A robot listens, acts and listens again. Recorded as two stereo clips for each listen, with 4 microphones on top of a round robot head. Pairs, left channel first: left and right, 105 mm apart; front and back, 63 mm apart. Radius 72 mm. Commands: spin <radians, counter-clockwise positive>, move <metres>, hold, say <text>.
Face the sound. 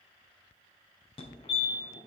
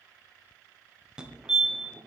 spin 1.83
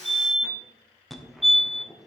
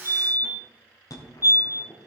say Facing the fire alarm.